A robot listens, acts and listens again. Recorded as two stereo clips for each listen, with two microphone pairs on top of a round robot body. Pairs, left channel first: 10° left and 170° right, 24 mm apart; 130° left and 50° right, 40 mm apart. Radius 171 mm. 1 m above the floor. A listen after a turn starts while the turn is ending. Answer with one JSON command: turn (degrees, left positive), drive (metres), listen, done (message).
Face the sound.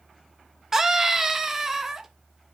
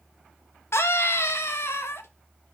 {"turn": 120}
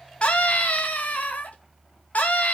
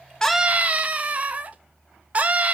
{"done": "Facing the scream."}